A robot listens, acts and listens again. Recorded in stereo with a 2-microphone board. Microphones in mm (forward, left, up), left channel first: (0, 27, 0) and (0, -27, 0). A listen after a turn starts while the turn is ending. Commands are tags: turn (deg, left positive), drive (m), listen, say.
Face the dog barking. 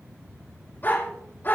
<turn deg="45"/>
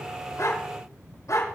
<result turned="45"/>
<turn deg="90"/>
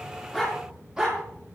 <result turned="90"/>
<turn deg="-15"/>
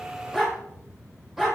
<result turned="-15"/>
<say>Found it: a dog barking, straight ahead, over 4 m away.</say>